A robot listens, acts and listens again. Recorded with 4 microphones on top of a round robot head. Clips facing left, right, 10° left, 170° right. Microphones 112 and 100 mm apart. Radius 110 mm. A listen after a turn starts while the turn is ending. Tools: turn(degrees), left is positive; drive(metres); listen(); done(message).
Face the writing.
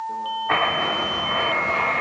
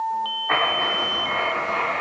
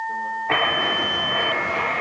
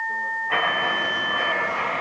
done("Facing the writing, 2 to 4 m away.")